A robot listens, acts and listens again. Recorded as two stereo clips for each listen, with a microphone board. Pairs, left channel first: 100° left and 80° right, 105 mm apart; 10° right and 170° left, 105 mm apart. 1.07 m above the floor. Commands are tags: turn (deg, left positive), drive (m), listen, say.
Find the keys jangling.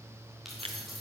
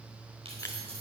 <turn deg="-170"/>
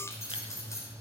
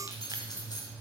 <turn deg="40"/>
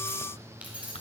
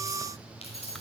<say>Facing the keys jangling.</say>